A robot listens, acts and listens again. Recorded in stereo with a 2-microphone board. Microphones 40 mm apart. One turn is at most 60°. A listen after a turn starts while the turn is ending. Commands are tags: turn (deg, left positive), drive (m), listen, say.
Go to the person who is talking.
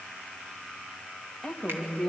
<turn deg="30"/>
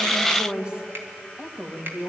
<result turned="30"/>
<turn deg="-25"/>
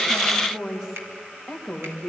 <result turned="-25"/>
<drive m="1.0"/>
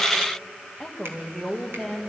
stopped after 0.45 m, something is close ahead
<say>Blocked. The woman speaking is further on, straight ahead.</say>